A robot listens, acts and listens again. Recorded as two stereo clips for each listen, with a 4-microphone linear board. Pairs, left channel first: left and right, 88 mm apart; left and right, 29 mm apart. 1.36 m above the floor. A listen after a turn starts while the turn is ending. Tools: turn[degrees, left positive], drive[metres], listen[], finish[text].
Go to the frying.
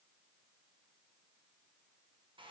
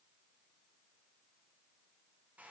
Action: listen[]
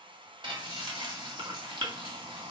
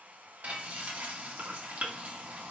Thought: The frying: about 75° right or 105° right.
Action: turn[-75]
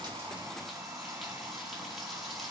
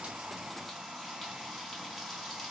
Action: drive[1.0]
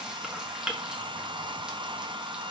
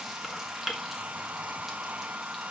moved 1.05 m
Thought: The frying is now 10° right.
Action: turn[-10]
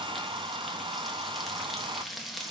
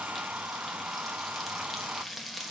Action: drive[1.0]
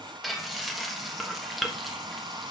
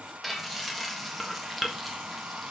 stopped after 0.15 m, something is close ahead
Action: finish[Arrived at the frying, straight ahead.]